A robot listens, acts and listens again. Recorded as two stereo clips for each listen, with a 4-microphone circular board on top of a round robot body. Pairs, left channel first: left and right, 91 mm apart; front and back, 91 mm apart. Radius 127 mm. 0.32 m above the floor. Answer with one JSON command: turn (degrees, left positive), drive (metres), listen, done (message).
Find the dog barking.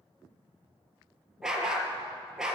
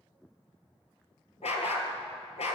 {"done": "Found it: a dog barking, straight ahead, 2 to 4 m away."}